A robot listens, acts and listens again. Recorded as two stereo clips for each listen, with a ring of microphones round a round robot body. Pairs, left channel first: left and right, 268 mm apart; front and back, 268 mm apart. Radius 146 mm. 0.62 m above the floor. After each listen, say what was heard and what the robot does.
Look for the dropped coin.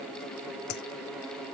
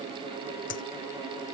The dropped coin: 55° left. Turn 55° left.
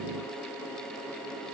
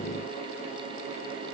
I heard a dropped coin from this way, but can't make it out now.